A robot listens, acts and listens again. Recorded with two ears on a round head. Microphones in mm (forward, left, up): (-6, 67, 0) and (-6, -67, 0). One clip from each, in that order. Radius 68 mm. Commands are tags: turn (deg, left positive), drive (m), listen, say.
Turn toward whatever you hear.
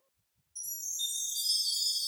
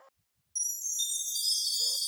<turn deg="-50"/>
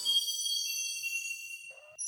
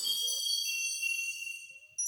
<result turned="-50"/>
<turn deg="-80"/>
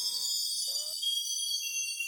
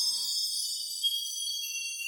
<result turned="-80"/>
<turn deg="15"/>
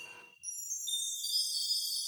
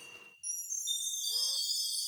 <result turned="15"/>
<say>Found it: a chime, straight ahead.</say>